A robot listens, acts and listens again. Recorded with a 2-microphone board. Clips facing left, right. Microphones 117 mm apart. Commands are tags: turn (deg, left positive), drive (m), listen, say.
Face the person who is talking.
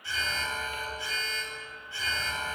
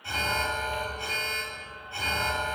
<listen/>
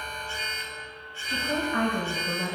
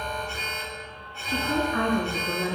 <turn deg="65"/>
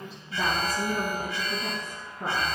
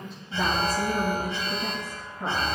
<say>Found it: a woman speaking, straight ahead.</say>